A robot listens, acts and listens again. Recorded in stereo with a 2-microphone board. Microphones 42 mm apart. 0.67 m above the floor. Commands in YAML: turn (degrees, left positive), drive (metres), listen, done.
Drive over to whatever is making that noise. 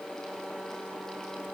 listen: true
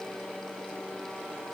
listen: true
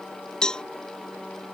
turn: 20
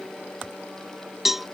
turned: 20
drive: 1.0
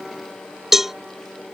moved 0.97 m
drive: 1.0
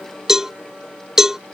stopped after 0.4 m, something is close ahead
turn: -10
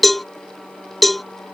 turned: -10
done: "Arrived at the cowbell, straight ahead."